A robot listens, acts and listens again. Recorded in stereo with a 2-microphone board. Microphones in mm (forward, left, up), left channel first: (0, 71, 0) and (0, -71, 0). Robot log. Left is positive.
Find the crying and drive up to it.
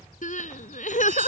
note: The crying: about 60° left or 120° left.
cmd yaw +60
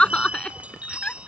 note: So it is at 10° left.
cmd yaw +10
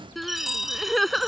cmd fwd 1.0
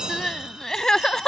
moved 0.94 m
cmd fwd 1.0
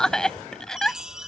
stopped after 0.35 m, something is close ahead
end: I am next to the crying.